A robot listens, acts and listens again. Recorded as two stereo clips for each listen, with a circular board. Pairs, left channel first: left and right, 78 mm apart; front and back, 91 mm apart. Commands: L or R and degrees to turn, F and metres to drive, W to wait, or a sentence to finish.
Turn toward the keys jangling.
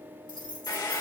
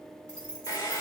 R80
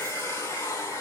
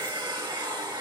W
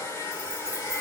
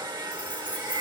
W
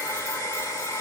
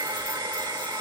Facing where the keys jangling came from. I can't hear it now.